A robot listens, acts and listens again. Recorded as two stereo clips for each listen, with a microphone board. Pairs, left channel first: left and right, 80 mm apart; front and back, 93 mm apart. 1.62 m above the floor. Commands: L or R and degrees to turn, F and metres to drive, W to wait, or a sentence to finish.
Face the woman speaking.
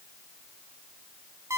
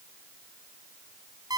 W
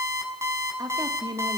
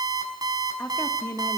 R55
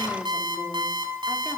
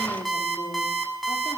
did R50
W
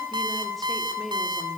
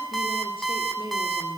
W
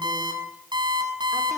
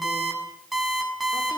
I heard a woman speaking from this way, but can't make it out now.